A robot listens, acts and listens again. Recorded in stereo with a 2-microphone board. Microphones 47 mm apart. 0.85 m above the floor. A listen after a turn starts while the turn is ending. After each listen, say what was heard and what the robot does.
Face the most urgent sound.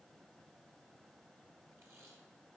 Keep listening.
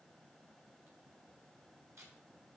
Keep listening.
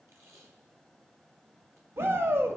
The shout: about 55° right or 125° right. Turn 55° right.
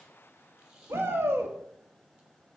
So it is at 65° right. Turn 65° right.
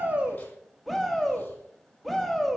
Found it: a shout, straight ahead.